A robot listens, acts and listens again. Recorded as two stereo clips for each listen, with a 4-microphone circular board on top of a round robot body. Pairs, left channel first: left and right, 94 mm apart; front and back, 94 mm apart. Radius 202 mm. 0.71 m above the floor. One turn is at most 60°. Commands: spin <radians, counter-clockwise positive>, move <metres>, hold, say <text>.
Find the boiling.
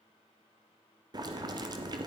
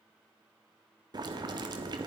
spin -1.05
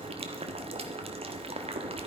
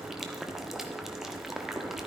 spin -1.05
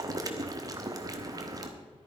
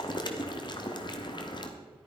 spin -0.70
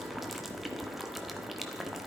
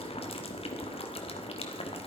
say Facing the boiling, 1 to 2 m away.